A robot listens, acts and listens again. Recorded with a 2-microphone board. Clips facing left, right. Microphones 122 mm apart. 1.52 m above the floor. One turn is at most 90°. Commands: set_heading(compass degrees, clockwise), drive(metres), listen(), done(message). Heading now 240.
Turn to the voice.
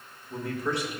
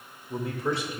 set_heading(270)
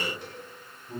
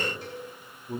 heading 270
set_heading(0)
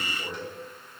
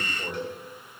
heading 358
set_heading(13)
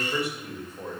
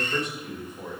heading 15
set_heading(0)
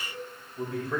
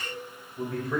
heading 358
done("Found it: a man speaking, straight ahead.")